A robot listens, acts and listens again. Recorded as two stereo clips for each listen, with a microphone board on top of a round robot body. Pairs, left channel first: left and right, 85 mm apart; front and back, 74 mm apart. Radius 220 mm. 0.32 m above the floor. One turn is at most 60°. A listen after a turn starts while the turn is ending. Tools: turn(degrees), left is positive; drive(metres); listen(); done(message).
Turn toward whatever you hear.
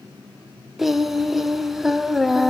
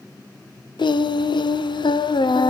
done("Facing the singing.")